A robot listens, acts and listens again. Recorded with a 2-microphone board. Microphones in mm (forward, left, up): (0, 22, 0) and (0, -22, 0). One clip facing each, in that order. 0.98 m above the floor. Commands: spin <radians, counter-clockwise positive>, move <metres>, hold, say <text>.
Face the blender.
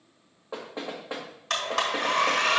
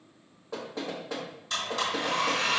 spin 1.57
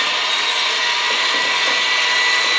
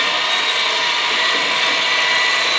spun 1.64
say Found it: a blender, straight ahead, 1 to 2 m away.